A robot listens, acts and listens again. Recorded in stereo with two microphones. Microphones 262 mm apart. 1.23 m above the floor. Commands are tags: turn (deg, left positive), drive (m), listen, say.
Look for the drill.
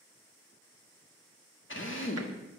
<turn deg="50"/>
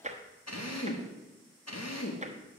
<turn deg="80"/>
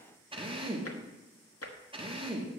<turn deg="-20"/>
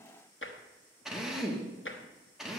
<say>Found it: a drill, straight ahead, 1 to 2 m away.</say>